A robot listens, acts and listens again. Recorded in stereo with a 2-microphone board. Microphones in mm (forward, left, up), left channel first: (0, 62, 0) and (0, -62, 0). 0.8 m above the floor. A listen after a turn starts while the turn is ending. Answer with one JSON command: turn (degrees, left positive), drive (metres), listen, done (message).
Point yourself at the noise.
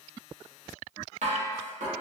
{"turn": -70}
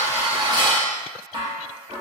{"turn": -35}
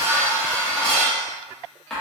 {"done": "Found it: dishes clattering, straight ahead, under 1 m away."}